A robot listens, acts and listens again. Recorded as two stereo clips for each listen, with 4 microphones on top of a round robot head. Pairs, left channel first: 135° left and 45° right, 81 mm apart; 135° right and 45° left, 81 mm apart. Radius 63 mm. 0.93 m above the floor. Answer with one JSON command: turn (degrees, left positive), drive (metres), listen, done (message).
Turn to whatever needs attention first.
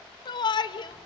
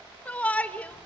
{"turn": 155}
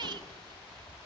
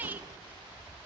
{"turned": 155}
{"turn": -20}
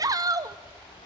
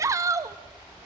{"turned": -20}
{"done": "Facing the shout, 1 to 2 m away."}